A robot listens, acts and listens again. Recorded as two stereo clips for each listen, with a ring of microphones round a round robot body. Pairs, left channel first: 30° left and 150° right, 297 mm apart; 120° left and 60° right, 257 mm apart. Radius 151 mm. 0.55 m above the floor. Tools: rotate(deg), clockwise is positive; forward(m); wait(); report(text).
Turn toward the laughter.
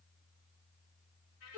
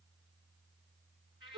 wait()
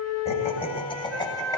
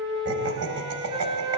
rotate(45)
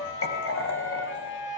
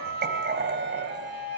rotate(15)
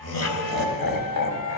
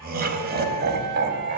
rotate(15)
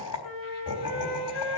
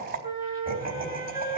report("Found it: laughter, straight ahead, over 4 m away.")